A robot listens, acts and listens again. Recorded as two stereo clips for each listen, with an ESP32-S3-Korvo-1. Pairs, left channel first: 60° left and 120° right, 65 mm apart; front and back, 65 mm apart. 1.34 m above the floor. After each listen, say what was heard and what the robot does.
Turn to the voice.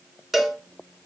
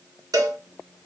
Keep listening.
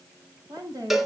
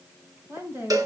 The woman speaking: 135° right. Turn 135° right.
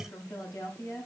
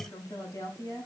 The woman speaking is now 20° left. Turn 20° left.
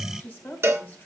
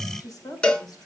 Found it: a woman speaking, straight ahead, over 4 m away.